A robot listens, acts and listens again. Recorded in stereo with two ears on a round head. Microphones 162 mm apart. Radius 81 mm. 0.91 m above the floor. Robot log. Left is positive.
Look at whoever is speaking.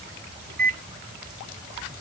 cmd idle
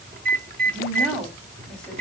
cmd yaw +30
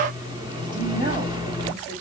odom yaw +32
note: So it is at 25° right.
cmd yaw -25
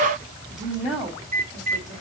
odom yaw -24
end: Facing the woman speaking.